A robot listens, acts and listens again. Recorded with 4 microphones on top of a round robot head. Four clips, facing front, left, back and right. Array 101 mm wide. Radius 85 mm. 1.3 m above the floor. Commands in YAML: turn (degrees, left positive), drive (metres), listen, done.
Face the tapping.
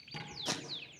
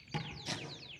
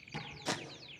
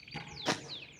turn: 90
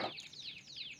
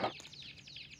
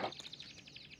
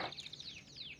listen: true
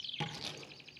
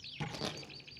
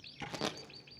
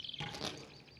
done: "Facing the tapping, over 4 m away."